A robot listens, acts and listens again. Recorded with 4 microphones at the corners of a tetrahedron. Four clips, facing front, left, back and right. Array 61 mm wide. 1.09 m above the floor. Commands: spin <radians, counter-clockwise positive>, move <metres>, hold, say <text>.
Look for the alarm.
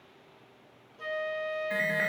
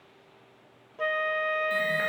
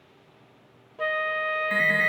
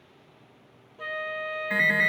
spin -1.66
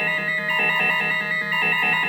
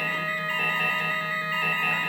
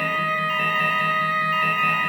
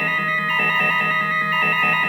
spin -0.52
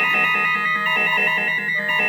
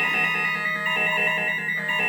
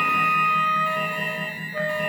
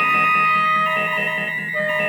spin 0.17
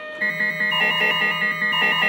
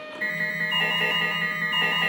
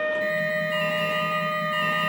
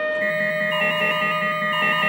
say Facing the alarm, over 4 m away.